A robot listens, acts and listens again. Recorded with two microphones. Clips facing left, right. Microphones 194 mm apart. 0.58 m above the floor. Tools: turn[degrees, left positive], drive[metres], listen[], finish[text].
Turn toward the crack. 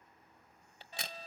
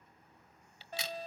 Thought: The crack: about 50° left or 130° left.
Action: turn[50]
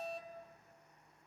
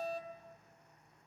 Action: listen[]
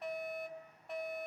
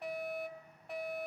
Action: finish[I heard a crack, but can't make it out now. It was about straight ahead or 80° left.]